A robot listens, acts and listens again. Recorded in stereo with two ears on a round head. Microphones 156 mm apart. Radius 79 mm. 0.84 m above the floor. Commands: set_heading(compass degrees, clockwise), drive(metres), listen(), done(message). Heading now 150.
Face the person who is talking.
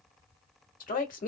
set_heading(100)
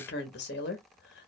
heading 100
set_heading(25)
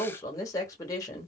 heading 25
set_heading(5)
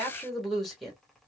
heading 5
done("Facing the woman speaking.")